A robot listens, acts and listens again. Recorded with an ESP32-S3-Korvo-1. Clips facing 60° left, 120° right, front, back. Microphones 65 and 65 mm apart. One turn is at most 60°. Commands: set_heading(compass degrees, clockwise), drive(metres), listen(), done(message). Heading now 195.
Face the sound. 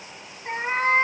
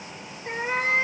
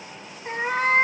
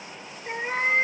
set_heading(180)
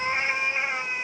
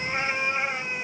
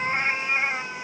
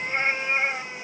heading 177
done("Facing the cat meowing, 1 to 2 m away.")